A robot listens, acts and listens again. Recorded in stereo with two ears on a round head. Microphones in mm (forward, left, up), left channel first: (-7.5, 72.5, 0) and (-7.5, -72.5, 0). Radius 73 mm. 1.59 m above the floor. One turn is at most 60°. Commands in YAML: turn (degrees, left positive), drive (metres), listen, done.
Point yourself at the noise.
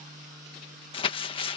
turn: 35
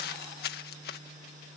turn: 60
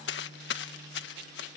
turn: 60
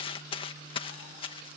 turn: 30
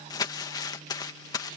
turn: 25
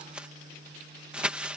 done: "Found it: crumpling, straight ahead."